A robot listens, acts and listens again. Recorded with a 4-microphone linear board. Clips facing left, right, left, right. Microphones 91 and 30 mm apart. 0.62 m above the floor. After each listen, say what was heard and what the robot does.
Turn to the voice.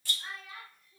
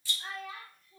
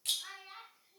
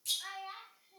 The child speaking: about 65° right or 115° right. Turn 65° right.
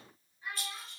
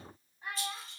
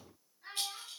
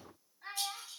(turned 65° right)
So it is at 50° right. Turn 50° right.
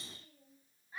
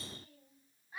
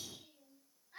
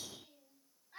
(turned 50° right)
The child speaking is now 10° right. Turn 10° right.
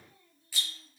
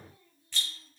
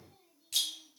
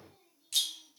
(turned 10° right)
Keep listening.
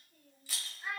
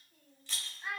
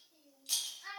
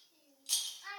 Facing the child speaking.